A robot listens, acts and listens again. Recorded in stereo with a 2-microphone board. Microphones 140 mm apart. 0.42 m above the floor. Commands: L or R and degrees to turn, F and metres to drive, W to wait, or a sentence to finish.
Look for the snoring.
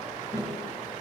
W
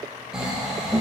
R30
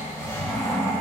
L25
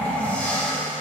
L15
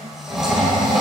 Found it: snoring, straight ahead, 1 to 2 m away.